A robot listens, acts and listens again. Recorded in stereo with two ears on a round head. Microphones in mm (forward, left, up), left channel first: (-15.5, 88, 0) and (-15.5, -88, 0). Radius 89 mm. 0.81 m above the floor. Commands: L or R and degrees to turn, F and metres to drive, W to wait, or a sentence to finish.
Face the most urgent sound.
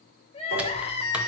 L30
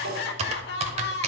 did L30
L115
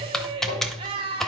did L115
R30
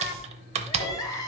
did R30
L20
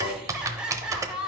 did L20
Facing the crying, 1 to 2 m away.